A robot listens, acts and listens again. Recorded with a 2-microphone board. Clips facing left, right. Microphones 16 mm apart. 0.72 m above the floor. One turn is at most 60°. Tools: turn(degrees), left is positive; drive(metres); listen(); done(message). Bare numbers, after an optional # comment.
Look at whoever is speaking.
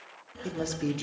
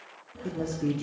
# The man speaking: about 65° left or 115° left.
turn(60)
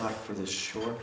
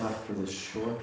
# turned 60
# So it is at 35° left.
turn(35)
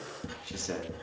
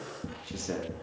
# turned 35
# The man speaking is now 10° left.
turn(10)
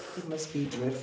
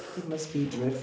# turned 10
done("Found it: a man speaking, straight ahead.")